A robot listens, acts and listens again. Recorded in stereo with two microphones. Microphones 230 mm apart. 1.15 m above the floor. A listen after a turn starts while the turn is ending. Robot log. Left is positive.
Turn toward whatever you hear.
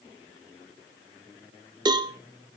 note: The cowbell: about 20° right or 160° right.
cmd yaw -20
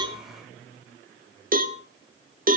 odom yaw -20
note: So it is at 140° right.
cmd yaw -140
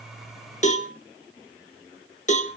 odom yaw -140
note: The cowbell is now 30° left.
cmd yaw +30
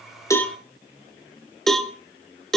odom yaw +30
end: Found it: a cowbell, straight ahead.